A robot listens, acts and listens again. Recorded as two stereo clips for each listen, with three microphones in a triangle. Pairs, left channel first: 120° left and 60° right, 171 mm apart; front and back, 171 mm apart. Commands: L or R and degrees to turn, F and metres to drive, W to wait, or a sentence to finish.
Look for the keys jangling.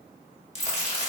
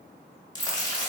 L100
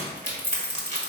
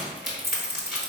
L20
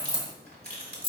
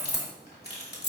Facing the keys jangling, 1 to 2 m away.